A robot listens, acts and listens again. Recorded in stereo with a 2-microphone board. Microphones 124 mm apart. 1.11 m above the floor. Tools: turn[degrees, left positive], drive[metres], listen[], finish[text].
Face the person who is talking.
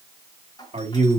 Thought: The man speaking: about 60° right or 120° right.
Action: turn[-60]
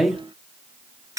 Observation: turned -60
Action: finish[Found it: a man speaking, straight ahead.]